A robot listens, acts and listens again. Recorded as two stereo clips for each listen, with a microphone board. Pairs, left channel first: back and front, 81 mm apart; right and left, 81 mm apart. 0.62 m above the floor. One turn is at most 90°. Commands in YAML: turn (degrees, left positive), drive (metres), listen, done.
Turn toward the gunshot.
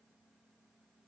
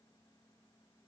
listen: true
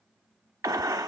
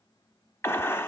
turn: -35
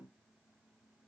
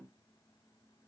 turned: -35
done: "Facing where the gunshot came from. I can't hear it now."